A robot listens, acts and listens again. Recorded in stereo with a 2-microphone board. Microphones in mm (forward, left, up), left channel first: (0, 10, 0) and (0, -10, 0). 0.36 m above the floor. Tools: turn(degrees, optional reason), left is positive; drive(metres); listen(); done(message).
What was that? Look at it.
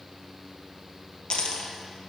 turn(degrees=65, reason="The dropped coin: about 65° left or 115° left.")
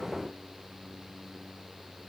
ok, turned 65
listen()
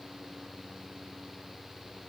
done("I heard a dropped coin, but can't make it out now. It was about straight ahead or 50° left.")